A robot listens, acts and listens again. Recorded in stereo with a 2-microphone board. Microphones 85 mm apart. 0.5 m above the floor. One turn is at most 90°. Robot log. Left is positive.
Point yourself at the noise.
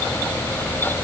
cmd idle
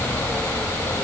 cmd idle
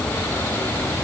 end: I can't make out anything to turn to.